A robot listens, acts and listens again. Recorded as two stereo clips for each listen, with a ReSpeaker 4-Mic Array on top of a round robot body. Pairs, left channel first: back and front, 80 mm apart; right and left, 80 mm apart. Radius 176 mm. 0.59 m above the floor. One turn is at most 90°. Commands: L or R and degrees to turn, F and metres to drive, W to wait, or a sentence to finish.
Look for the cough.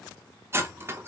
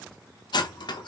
W
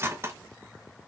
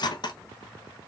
W
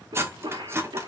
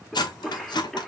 Found it: a cough, straight ahead.